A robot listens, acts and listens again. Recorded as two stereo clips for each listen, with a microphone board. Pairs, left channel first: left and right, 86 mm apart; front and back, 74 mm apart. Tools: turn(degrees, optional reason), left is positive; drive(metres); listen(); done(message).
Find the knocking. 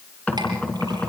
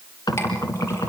turn(degrees=15, reason="The knocking: 15° left.")
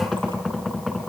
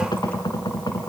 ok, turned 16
done("Found it: knocking, straight ahead.")